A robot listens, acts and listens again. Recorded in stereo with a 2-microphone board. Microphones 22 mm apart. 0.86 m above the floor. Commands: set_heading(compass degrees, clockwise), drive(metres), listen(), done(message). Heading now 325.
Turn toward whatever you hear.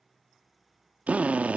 set_heading(55)
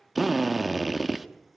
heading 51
done("Found it: a drill, straight ahead, 1 to 2 m away.")